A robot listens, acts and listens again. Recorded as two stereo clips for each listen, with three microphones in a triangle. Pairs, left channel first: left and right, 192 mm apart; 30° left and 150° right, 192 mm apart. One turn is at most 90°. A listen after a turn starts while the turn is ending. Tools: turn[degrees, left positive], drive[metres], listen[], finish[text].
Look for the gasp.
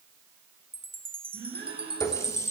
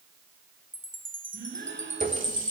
Thought: The gasp: 115° right.
Action: turn[-90]
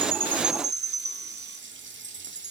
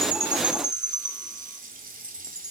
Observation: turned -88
Thought: Nothing new. It was at 30° right.
Action: turn[-30]
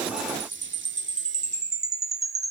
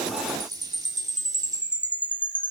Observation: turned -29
Action: finish[Facing where the gasp came from. I can't hear it now.]